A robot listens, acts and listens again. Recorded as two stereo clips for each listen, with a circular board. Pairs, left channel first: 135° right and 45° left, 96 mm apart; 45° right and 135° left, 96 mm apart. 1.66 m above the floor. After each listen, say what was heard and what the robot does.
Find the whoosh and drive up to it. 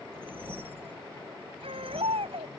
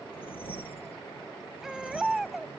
The whoosh: 25° right. Turn 25° right.
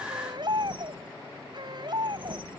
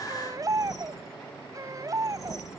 The whoosh is now 10° left. Turn 10° left.
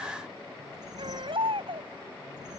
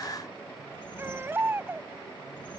Keep listening.
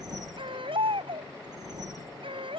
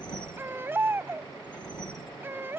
Drive 1.0 m forward.
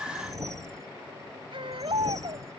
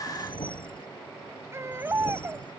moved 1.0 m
The whoosh is now 10° right. Turn 10° right.
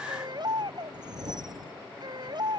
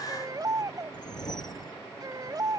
Drive 1.0 m forward.
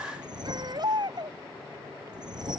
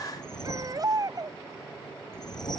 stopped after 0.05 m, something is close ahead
Arrived at the whoosh, straight ahead.